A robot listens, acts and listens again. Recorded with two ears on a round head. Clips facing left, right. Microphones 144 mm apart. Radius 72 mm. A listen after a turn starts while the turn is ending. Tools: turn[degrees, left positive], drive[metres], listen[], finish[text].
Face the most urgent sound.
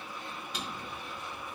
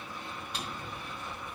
Action: listen[]
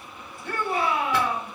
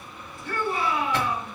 Thought: The shout: about 65° left or 115° left.
Action: turn[65]
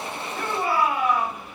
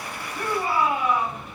Thought: So it is at 50° left.
Action: turn[50]
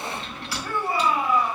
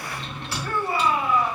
Thought: The shout is now 15° left.
Action: turn[15]
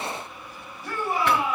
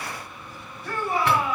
Action: finish[Facing the shout.]